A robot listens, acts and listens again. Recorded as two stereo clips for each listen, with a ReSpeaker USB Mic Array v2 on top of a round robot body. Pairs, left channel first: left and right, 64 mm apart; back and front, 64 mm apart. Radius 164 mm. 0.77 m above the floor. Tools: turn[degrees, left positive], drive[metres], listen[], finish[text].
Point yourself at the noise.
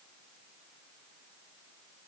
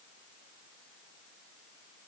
Action: listen[]
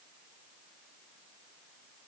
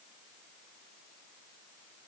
Action: listen[]
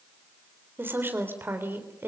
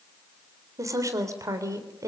Thought: The woman speaking: 35° right.
Action: turn[-35]
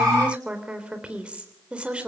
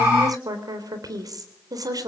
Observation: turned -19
Thought: The woman speaking is now 20° right.
Action: turn[-20]
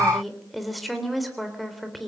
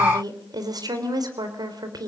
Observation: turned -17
Action: finish[Facing the woman speaking, 2 to 4 m away.]